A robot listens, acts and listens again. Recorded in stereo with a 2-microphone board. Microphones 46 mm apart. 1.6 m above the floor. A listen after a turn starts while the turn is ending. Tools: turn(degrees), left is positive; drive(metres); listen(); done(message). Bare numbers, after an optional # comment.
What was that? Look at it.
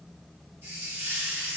# The hiss: about 45° right or 135° right.
turn(-45)
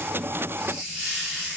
done("Facing the hiss, 1 to 2 m away.")